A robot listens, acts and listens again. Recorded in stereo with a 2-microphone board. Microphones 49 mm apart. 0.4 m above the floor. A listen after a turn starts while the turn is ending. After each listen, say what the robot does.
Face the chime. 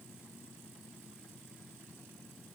Keep listening.
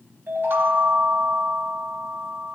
Turn 50° right.
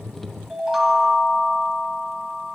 Facing the chime, 1 to 2 m away.